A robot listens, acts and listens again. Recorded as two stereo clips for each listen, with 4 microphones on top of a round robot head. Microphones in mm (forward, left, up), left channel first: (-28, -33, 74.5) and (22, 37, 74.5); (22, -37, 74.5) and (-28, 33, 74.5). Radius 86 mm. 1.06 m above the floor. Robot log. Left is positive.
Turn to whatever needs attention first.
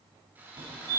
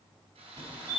note: The fire alarm: 85° left.
cmd yaw +85
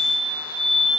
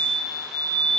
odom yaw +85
end: Found it: a fire alarm, straight ahead.